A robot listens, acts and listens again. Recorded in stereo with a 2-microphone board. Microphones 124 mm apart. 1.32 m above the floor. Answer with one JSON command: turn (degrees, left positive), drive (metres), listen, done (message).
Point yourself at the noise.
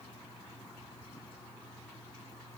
{"listen": true}
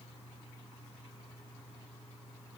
{"listen": true}
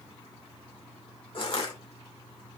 {"turn": 45}
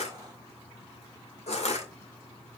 {"turn": 85}
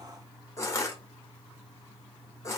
{"turn": 30}
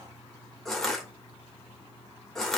{"done": "Facing the crushing, 2 to 4 m away."}